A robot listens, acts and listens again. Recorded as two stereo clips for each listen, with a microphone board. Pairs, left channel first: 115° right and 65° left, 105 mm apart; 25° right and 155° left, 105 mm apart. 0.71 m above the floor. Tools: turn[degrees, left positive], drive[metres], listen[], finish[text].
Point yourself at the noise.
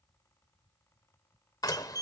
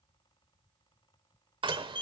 Thought: The door slam: 165° right.
Action: turn[-165]
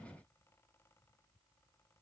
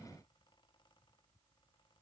Action: finish[Facing where the door slam came from. I can't hear it now.]